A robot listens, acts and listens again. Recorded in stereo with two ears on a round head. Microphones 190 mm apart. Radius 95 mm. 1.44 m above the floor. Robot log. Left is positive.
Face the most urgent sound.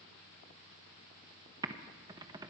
cmd idle
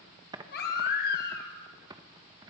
note: The baby crying: about 50° left or 130° left.
cmd yaw +50
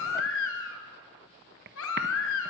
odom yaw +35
note: So it is at 90° left.
cmd yaw +90
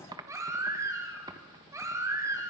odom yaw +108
note: The baby crying is now 15° right.
cmd yaw -15
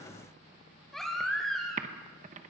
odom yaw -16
end: Found it: a baby crying, straight ahead, 2 to 4 m away.